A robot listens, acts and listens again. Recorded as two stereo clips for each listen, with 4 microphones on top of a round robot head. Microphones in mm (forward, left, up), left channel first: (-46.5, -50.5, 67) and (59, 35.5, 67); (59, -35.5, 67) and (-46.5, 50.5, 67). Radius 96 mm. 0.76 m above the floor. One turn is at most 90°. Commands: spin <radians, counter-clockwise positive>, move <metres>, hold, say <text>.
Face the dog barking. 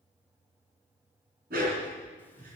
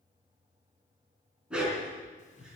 spin 0.96
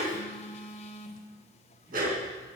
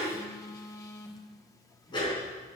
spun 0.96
spin 0.35
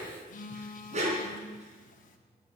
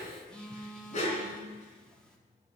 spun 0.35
say Found it: a dog barking, straight ahead.